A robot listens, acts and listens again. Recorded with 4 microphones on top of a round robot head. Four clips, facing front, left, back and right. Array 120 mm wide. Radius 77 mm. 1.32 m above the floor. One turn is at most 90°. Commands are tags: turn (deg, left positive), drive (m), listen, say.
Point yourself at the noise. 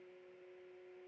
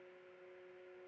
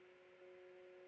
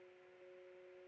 <listen/>
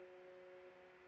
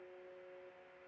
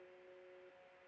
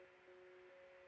<listen/>
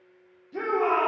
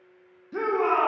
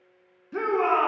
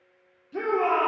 <turn deg="90"/>
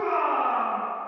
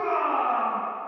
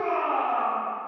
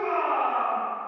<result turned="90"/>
<turn deg="45"/>
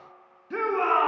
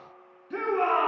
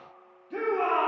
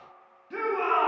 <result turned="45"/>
<turn deg="10"/>
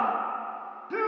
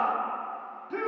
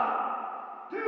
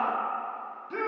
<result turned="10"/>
<say>Found it: a shout, straight ahead, 1 to 2 m away.</say>